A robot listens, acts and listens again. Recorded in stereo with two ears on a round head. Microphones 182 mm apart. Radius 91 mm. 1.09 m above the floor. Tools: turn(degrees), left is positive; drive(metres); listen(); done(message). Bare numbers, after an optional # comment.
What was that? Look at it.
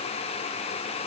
listen()
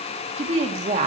# The woman speaking: about 35° right or 145° right.
turn(-35)
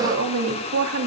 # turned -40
# So it is at 100° right.
turn(-100)
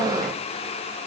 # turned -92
# Nothing new. It was at 10° right.
turn(-10)
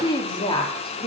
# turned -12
# The woman speaking is now 25° left.
turn(25)
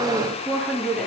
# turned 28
done("Facing the woman speaking.")